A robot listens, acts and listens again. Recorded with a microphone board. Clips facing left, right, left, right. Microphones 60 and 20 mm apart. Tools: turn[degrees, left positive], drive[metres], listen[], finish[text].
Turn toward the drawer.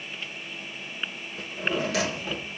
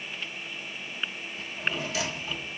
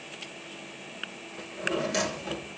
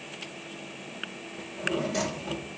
Thought: The drawer: about 70° left or 110° left.
Action: turn[70]
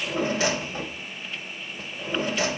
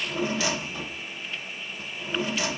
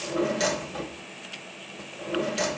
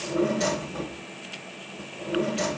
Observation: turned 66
Thought: So it is at 35° left.
Action: turn[35]
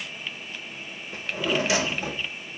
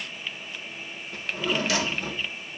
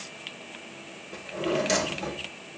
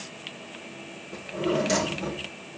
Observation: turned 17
Thought: The drawer is now 20° left.
Action: turn[20]
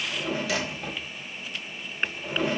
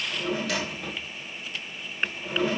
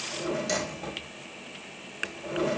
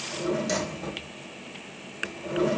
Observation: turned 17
Action: finish[Facing the drawer.]